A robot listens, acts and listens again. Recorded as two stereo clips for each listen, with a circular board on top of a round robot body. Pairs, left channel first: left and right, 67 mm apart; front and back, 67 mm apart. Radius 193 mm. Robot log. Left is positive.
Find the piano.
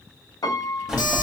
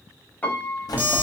note: The piano: 65° left.
cmd yaw +65
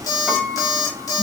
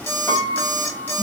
cmd idle
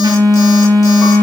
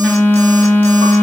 cmd idle
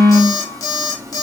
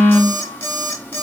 end: Facing where the piano came from. I can't hear it now.